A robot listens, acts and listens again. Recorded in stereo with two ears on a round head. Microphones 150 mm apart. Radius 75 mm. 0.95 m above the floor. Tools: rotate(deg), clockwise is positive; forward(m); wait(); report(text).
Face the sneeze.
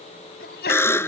rotate(-65)
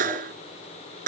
wait()
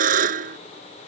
report("I heard a sneeze, but can't make it out now. It was about straight ahead or 50° left.")